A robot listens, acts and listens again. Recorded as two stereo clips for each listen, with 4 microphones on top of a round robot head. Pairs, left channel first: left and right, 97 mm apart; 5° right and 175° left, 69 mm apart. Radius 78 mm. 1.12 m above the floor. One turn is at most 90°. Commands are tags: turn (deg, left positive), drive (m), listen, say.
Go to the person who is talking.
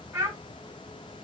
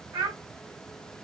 <turn deg="-90"/>
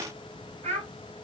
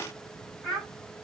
<turn deg="-90"/>
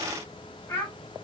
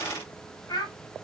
<turn deg="10"/>
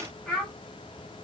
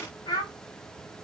<drive m="1.0"/>
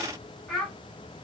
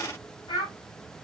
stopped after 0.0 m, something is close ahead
<say>Something is in my way. I am facing the child speaking but have not reached it.</say>